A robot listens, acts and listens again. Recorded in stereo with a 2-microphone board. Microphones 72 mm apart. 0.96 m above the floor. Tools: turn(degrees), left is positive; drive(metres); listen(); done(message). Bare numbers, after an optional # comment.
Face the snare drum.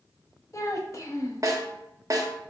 # The snare drum: about 45° right or 135° right.
turn(-45)
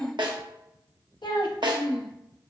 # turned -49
# So it is at 90° right.
turn(-90)
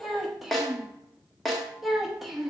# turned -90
done("Facing the snare drum.")